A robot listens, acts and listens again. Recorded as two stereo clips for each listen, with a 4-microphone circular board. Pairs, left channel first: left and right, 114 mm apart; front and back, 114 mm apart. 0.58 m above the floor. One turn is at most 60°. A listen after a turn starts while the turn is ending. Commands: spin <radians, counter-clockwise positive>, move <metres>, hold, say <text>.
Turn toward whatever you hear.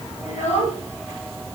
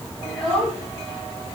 spin 1.05
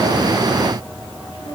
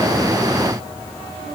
spin 0.52
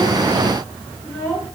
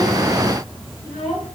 spin 0.35
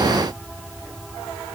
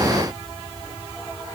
hold
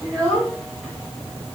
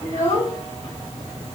say Facing the child speaking, over 4 m away.